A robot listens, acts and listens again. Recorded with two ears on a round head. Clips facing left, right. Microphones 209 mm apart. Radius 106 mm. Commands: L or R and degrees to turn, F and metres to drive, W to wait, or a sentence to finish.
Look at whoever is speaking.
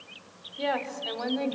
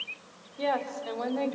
L30
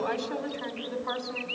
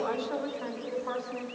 L140
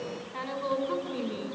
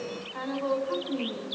L35
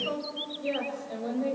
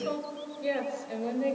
R25
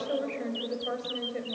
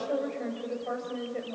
L10
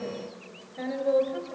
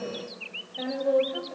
Found it: a woman speaking, straight ahead, over 4 m away.